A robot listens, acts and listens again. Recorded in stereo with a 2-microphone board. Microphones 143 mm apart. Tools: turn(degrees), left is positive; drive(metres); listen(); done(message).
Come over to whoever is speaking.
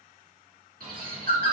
listen()
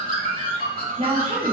turn(degrees=-50)
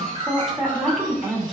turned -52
drive(metres=1.0)
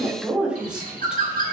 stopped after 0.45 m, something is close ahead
done("Something is in my way. I am facing the woman speaking but have not reached it.")